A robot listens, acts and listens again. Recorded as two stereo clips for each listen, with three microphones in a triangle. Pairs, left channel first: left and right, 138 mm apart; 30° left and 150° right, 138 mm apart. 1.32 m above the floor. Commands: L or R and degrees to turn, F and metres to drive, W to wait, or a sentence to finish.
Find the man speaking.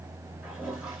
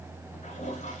W
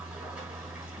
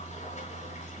W
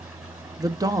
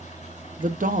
R155
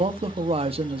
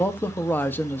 R45
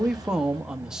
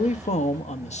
Found it: a man speaking, straight ahead, under 1 m away.